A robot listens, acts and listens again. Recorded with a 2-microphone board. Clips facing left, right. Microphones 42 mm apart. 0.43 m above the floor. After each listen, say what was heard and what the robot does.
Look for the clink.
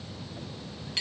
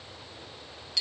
The clink: about 35° left or 145° left. Turn 35° left.
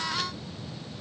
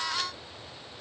Keep listening.
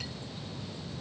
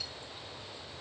Keep listening.
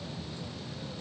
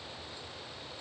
I heard a clink, but can't make it out now. It was about straight ahead or 110° left.